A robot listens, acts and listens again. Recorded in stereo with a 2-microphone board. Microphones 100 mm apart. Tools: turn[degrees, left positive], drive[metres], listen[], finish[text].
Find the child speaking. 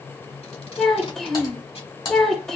Action: turn[30]
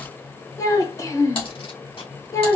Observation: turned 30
Thought: So it is at 145° left.
Action: turn[145]
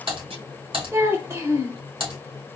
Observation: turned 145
Thought: The child speaking is now 25° right.
Action: turn[-25]
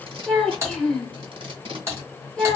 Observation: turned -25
Thought: The child speaking is now 10° left.
Action: turn[10]
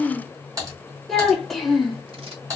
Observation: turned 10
Action: finish[Facing the child speaking.]